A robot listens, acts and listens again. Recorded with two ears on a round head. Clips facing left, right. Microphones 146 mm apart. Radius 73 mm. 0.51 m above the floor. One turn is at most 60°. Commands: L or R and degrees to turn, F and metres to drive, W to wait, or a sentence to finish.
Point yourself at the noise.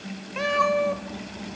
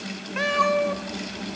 L30
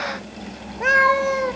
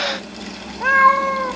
L60
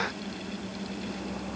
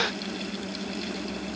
L60
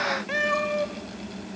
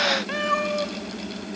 L10
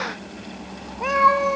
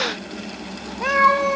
Found it: a cat meowing, straight ahead.